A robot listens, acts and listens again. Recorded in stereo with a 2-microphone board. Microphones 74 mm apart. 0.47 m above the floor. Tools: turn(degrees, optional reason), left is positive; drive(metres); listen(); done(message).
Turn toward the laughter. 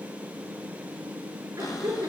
turn(degrees=-40, reason="The laughter: about 40° right or 140° right.")
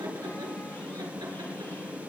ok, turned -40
listen()
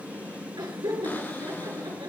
turn(degrees=-100, reason="So it is at 100° right.")
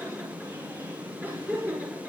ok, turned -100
turn(degrees=-25, reason="The laughter is now 25° right.")
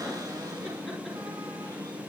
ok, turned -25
listen()
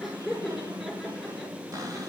done("Found it: laughter, straight ahead.")